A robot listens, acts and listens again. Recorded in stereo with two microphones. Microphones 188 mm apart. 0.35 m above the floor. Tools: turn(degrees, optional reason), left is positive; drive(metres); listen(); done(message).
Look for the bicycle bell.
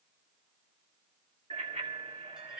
turn(degrees=-40, reason="The bicycle bell: about 40° right or 140° right.")
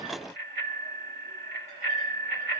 turn(degrees=-100, reason="So it is at 100° right.")
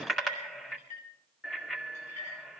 done("Facing the bicycle bell, 2 to 4 m away.")